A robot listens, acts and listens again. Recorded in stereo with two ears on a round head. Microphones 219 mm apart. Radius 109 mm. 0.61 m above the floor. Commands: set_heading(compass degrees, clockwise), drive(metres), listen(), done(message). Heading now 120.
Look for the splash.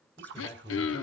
set_heading(170)
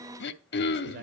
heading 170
listen()
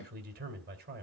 done("I heard a splash, but can't make it out now. It was about straight ahead or 80° right.")